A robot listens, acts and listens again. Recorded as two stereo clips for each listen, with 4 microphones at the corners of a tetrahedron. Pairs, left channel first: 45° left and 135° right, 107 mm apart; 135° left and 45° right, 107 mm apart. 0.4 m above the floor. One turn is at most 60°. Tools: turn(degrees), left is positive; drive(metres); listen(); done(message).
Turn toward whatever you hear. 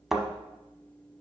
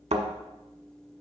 turn(degrees=-50)
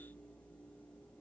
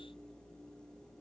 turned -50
done("I heard a thud from this way, but can't make it out now.")